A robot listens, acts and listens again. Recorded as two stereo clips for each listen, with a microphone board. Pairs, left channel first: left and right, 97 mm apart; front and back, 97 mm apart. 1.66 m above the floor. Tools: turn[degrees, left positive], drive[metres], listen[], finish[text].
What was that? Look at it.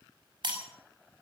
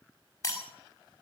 Thought: The breaking glass: 60° right.
Action: turn[-60]
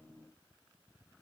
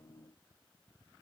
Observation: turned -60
Action: finish[Facing where the breaking glass came from. I can't hear it now.]